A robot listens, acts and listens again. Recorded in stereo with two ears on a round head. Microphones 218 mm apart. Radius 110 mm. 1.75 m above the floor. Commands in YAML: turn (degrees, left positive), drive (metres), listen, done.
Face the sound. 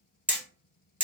turn: -30
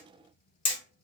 turn: 25
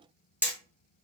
done: "Found it: hammering, straight ahead."